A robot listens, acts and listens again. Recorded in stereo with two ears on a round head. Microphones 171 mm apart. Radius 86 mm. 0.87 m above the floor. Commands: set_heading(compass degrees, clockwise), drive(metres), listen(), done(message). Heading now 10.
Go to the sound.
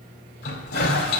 set_heading(310)
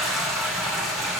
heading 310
drive(1.0)
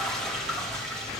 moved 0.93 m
drive(1.0)
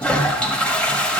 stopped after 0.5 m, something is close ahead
done("Arrived at the toilet flushing, straight ahead.")